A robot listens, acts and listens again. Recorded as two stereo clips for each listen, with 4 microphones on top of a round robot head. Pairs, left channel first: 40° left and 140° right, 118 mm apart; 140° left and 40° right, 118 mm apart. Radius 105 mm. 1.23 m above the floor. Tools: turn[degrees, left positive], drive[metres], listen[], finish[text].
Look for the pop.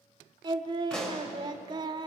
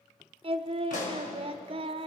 Thought: The pop: 125° left.
Action: turn[125]
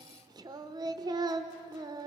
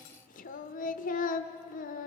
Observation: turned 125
Action: finish[Facing where the pop came from. I can't hear it now.]